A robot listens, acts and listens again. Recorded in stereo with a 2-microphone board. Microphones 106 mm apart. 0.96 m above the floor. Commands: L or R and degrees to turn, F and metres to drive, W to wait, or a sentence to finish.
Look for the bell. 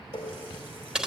W
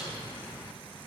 W
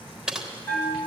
L15
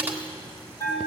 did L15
L155
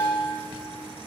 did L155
R20
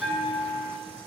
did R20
Found it: a bell, straight ahead.